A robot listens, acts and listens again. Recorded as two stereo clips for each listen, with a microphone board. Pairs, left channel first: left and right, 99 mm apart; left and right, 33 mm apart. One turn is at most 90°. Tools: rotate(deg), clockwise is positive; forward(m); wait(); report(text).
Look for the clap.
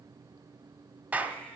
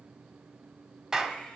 rotate(30)
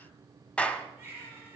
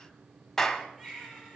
rotate(-15)
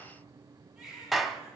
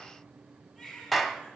report("Found it: a clap, straight ahead, 1 to 2 m away.")